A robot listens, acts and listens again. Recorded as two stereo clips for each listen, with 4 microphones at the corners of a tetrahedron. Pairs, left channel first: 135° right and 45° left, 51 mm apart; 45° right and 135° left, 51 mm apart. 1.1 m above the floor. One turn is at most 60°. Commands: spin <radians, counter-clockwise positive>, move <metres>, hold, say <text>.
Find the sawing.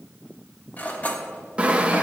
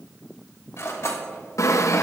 spin -0.44
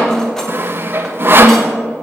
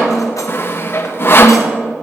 say Found it: sawing, straight ahead, under 1 m away.